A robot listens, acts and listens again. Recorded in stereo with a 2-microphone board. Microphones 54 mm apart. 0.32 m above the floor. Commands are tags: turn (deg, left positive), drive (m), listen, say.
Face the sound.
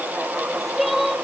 <turn deg="30"/>
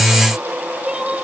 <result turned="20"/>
<turn deg="-20"/>
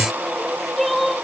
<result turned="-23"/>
<say>Found it: crying, straight ahead.</say>